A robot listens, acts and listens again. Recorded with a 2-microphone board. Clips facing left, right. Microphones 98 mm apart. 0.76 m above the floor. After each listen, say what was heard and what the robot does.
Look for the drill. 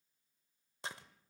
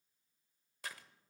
Keep listening.
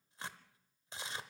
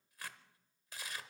Keep listening.
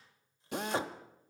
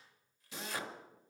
The drill: about 55° left or 125° left. Turn 55° left.
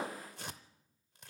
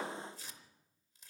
So it is at 25° left. Turn 25° left.
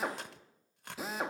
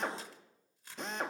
Facing the drill.